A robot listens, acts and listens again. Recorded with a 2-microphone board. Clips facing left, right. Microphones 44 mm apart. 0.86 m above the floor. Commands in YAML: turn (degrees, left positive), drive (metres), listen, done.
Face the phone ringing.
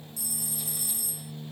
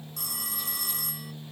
turn: -60
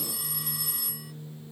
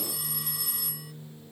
done: "Facing the phone ringing."